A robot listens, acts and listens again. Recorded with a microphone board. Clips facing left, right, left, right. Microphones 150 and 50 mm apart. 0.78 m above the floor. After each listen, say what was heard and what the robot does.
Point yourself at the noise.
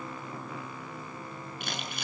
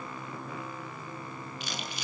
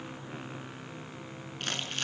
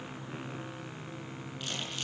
The crumpling: about 55° left or 125° left. Turn 55° left.
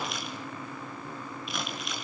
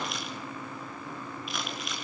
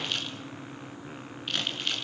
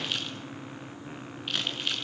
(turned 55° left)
Facing the crumpling.